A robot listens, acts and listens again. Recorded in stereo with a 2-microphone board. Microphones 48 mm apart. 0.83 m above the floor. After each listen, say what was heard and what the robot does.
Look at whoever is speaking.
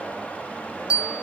Keep listening.
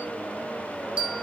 Keep listening.
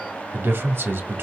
The man speaking: about 55° right or 125° right. Turn 55° right.
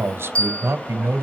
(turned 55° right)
So it is at 60° right. Turn 60° right.
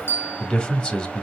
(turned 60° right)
The man speaking is now 25° left. Turn 25° left.
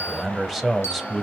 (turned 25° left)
Facing the man speaking.